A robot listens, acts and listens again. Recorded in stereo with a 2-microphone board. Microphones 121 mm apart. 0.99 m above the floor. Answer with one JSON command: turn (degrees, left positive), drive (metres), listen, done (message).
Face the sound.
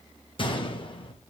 {"turn": 40}
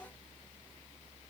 {"listen": true}
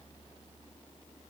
{"done": "I heard a gunshot, but can't make it out now. It was about straight ahead or 100° left."}